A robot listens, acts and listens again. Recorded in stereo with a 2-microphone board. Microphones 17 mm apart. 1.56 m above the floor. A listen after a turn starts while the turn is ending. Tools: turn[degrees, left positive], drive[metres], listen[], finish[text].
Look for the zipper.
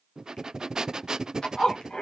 Thought: The zipper: about 60° left or 120° left.
Action: turn[60]
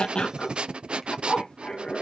Thought: So it is at 60° left.
Action: turn[60]
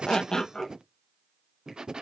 Thought: The zipper is now 25° left.
Action: turn[25]
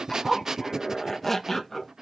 Thought: The zipper is now 10° left.
Action: turn[10]
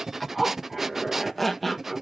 Action: finish[Facing the zipper, 1 to 2 m away.]